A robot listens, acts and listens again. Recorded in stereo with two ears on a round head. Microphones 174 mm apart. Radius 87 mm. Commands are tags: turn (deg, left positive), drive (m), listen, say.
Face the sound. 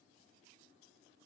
<listen/>
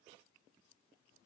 <listen/>
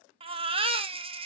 <turn deg="-30"/>
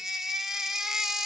<say>Facing the baby crying.</say>